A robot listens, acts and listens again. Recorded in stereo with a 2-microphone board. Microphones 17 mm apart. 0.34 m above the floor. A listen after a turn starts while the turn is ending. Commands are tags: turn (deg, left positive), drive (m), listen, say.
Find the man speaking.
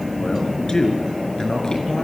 <turn deg="40"/>
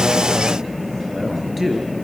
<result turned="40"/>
<say>Found it: a man speaking, straight ahead, over 4 m away.</say>